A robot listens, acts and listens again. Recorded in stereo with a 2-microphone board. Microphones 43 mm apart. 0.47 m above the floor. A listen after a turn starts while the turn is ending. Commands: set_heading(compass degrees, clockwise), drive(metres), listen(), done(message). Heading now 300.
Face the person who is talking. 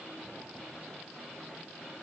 listen()
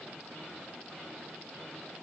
listen()
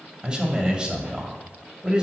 set_heading(320)
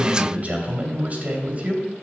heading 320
set_heading(100)
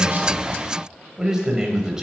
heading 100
set_heading(115)
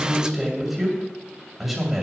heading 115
done("Facing the man speaking.")